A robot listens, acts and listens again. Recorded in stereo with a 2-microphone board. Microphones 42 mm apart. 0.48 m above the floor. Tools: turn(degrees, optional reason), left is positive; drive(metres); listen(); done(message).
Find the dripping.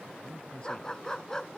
listen()
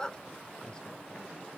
listen()
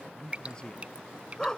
turn(degrees=-30, reason="The dripping: about 30° right or 150° right.")
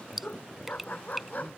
done("Facing the dripping.")